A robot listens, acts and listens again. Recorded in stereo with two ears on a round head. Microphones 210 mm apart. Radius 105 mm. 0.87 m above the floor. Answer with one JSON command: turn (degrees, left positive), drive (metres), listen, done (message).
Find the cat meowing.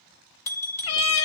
{"turn": 75}
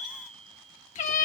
{"turn": 30}
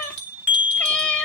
{"done": "Facing the cat meowing, under 1 m away."}